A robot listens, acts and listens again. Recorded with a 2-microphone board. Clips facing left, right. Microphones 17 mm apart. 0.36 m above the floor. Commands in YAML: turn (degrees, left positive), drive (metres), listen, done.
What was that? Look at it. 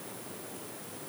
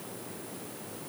listen: true
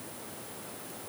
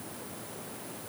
listen: true
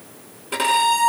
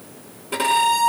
turn: 30
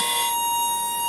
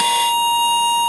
turn: -20
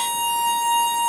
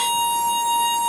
done: "Facing the violin, over 4 m away."